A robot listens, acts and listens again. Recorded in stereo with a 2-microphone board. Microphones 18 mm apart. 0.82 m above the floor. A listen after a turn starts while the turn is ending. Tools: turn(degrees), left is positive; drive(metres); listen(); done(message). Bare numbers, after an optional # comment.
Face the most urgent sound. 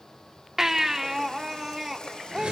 # The baby crying: about 30° right or 150° right.
turn(-30)
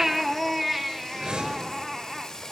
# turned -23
done("Facing the baby crying, 1 to 2 m away.")